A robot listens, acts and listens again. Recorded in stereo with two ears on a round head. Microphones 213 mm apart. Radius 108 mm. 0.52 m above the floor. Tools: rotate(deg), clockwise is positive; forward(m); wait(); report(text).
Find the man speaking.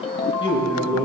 rotate(-20)
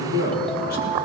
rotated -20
rotate(-140)
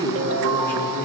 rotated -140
rotate(-10)
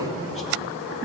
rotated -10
report("Facing the man speaking.")